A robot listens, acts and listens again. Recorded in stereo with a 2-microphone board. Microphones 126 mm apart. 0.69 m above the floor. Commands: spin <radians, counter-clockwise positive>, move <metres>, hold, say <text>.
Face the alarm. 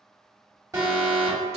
spin -0.44
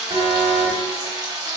spin -2.27
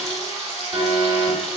spin -0.52
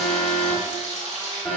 say Found it: an alarm, straight ahead.